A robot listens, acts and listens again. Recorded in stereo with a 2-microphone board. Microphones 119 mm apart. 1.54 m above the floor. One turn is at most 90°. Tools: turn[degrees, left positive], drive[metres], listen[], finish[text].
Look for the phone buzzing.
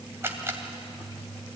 Action: listen[]
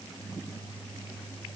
Action: listen[]
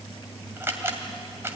Action: finish[I can't make out a phone buzzing, only a camera shutter.]